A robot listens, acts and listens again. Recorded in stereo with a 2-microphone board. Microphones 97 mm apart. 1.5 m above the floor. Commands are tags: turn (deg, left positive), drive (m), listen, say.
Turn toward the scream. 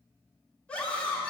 <turn deg="30"/>
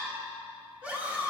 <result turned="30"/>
<turn deg="-15"/>
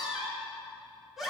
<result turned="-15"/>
<say>Found it: a scream, straight ahead, 1 to 2 m away.</say>